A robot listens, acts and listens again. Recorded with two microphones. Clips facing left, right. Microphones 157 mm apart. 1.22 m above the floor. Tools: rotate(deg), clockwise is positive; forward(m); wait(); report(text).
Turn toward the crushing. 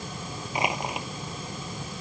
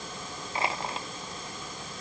rotate(-15)
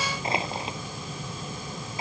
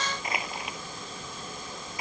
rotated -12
rotate(-150)
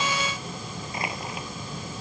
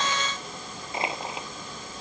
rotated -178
rotate(25)
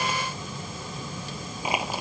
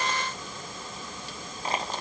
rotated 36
rotate(-10)
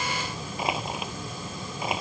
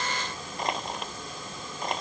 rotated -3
report("Facing the crushing.")